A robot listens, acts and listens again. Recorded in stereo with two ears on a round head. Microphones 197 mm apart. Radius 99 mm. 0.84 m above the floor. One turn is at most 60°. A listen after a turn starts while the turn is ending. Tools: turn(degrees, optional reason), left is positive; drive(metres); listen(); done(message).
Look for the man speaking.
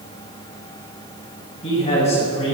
turn(degrees=30, reason="The man speaking: about 30° left or 150° left.")
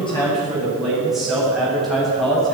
done("Found it: a man speaking, straight ahead.")